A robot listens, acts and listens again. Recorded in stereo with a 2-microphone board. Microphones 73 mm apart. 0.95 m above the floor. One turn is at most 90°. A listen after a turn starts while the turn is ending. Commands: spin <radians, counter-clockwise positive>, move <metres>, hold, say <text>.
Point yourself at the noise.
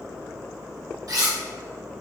spin -1.05
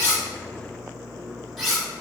say Facing the cutlery clinking, 1 to 2 m away.